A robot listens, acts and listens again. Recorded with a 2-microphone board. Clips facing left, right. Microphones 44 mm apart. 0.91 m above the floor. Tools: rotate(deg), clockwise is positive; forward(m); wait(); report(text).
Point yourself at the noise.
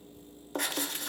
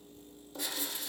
rotate(-60)
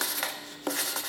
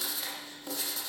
rotate(-60)
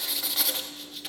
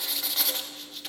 report("Facing the writing.")